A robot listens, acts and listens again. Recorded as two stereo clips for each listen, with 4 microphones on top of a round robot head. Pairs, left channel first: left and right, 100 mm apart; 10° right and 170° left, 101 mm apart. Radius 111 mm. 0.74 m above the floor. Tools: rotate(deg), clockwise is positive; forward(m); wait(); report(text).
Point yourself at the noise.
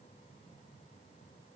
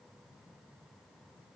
wait()
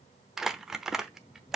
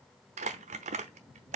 rotate(175)
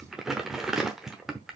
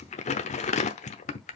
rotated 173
report("Facing the crumpling, under 1 m away.")